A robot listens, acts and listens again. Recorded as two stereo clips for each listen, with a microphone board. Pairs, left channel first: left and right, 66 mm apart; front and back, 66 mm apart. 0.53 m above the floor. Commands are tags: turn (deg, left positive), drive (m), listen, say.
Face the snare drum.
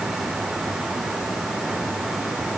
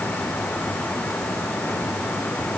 <listen/>
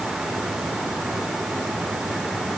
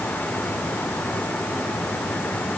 <listen/>
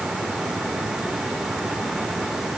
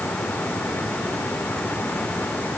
<say>I can't make out a snare drum to turn to.</say>